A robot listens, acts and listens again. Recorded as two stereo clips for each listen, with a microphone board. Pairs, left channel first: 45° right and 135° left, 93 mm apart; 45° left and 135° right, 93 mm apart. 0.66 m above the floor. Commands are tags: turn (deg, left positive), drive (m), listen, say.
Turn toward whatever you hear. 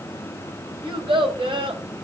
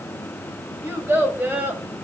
<turn deg="150"/>
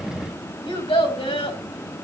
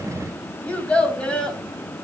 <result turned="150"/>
<turn deg="-35"/>
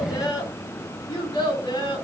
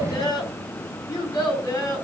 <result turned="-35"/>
<say>Found it: a child speaking, straight ahead.</say>